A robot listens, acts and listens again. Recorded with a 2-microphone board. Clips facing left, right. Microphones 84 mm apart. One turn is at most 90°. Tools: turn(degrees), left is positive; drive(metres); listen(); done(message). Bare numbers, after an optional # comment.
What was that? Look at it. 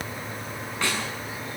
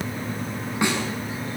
# The snare drum: about 15° right or 165° right.
turn(-15)
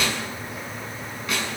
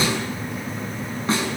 # So it is at 150° right.
turn(-90)
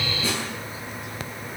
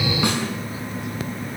# The snare drum is now 60° right.
turn(-60)
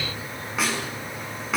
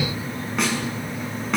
done("Found it: a snare drum, straight ahead.")